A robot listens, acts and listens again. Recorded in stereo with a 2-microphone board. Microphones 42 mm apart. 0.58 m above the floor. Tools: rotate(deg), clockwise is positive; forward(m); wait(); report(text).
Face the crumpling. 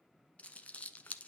rotate(-30)
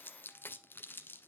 rotate(-115)
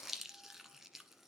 rotate(10)
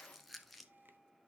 report("Facing the crumpling.")